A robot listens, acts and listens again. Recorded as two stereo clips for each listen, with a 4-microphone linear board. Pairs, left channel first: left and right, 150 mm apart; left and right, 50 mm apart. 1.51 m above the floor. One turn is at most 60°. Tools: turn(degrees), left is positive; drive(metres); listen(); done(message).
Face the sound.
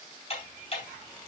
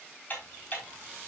turn(degrees=45)
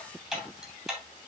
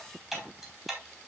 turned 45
done("Facing the ticking, over 4 m away.")